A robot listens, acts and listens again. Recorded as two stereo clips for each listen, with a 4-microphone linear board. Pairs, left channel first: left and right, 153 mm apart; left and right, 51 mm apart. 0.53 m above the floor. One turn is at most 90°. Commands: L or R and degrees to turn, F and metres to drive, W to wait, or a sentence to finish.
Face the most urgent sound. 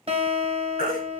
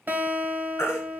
L70
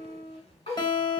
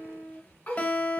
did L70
W
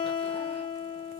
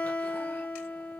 W
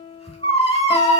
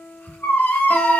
L40
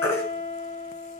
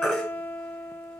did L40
L15
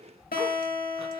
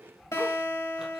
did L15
W
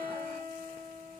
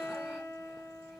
W
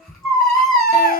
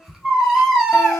Facing the baby crying, 1 to 2 m away.